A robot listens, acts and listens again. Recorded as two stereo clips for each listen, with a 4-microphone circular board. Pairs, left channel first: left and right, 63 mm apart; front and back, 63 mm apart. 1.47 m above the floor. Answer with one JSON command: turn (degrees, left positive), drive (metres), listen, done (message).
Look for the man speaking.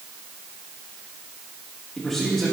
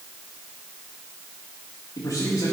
{"done": "Facing the man speaking."}